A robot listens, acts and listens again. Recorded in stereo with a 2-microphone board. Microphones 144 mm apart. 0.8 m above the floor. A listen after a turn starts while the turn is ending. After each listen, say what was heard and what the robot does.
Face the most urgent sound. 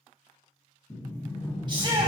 The shout: about 35° right or 145° right. Turn 35° right.
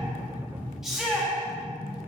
Facing the shout, 1 to 2 m away.